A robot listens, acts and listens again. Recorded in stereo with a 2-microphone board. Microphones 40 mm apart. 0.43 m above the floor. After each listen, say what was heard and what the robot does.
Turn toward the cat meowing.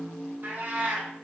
The cat meowing: about 45° right or 135° right. Turn 45° right.
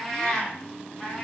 So it is at 25° left. Turn 25° left.
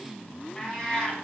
The cat meowing is now 25° left. Turn 25° left.
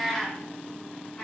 The cat meowing is now 25° left. Turn 25° left.
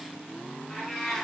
Facing the cat meowing, 1 to 2 m away.